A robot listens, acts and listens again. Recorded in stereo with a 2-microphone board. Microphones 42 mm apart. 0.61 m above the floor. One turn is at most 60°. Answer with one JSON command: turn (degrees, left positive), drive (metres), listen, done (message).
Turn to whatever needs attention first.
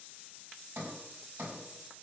{"listen": true}
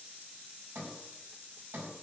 {"listen": true}
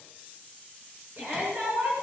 {"turn": -55}
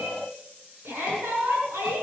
{"turn": -60}
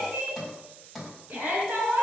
{"turn": -45}
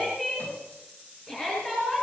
{"done": "Found it: a shout, straight ahead."}